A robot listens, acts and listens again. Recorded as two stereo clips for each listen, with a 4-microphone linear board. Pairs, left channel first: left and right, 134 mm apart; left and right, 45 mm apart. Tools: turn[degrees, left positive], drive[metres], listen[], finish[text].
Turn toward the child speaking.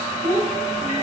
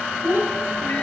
Thought: The child speaking: about 70° right or 110° right.
Action: turn[-70]
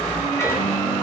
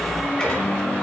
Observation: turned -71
Action: listen[]
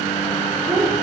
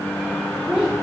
Thought: So it is at 30° right.
Action: turn[-30]
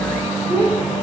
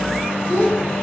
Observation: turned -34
Thought: The child speaking is now 10° left.
Action: turn[10]
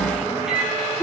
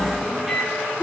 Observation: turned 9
Thought: The child speaking is now 10° left.
Action: turn[10]
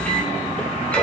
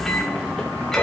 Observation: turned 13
Action: listen[]
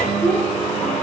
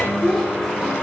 Action: finish[Facing the child speaking, over 4 m away.]